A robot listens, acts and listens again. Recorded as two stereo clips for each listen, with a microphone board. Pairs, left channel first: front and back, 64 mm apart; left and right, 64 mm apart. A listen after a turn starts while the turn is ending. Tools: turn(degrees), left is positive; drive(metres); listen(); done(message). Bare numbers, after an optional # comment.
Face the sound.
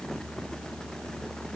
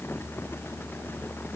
listen()
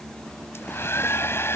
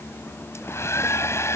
# The hair dryer: 45° left.
turn(45)
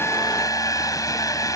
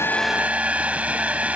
# The hair dryer is now 20° right.
turn(-20)
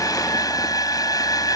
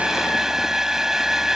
done("Facing the hair dryer.")